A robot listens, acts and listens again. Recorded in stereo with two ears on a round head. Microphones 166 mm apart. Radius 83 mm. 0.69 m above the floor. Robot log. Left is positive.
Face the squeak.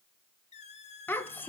note: The squeak: about 35° left or 145° left.
cmd yaw +35
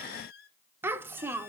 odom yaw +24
note: So it is at 120° left.
cmd yaw +120
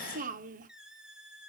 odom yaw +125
end: Found it: a squeak, straight ahead, 1 to 2 m away.